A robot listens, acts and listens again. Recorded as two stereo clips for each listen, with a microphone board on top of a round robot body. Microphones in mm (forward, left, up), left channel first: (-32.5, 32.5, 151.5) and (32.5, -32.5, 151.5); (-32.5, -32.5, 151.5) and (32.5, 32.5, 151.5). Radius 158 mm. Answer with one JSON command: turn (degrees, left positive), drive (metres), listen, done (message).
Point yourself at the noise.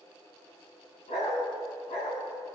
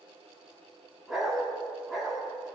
{"turn": 135}
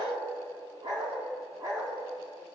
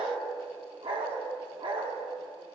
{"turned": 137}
{"turn": 15}
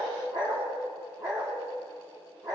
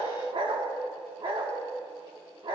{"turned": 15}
{"done": "Facing the dog barking."}